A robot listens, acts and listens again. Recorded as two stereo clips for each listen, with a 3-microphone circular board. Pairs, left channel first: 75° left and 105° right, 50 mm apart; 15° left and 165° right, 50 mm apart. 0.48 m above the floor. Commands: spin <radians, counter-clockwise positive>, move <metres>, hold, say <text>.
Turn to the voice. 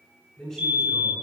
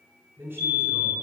spin 2.44
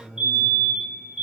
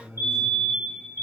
say Found it: a man speaking, straight ahead, over 4 m away.